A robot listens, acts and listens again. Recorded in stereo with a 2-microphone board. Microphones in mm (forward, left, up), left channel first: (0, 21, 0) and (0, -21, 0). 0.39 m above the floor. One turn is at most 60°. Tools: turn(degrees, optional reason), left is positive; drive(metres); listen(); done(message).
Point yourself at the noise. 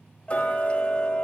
turn(degrees=30, reason="The ticking: about 30° left or 150° left.")
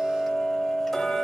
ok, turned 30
done("Found it: ticking, straight ahead, under 1 m away.")